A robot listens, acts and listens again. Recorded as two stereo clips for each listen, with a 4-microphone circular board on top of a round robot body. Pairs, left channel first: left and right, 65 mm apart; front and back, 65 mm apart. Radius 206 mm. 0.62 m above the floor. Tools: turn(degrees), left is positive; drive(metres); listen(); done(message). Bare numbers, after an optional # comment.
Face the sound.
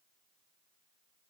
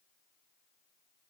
listen()
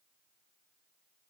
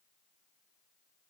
listen()
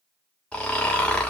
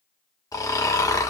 # The snoring: 20° left.
turn(20)
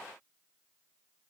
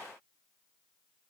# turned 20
listen()
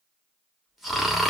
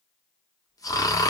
done("Found it: snoring, straight ahead.")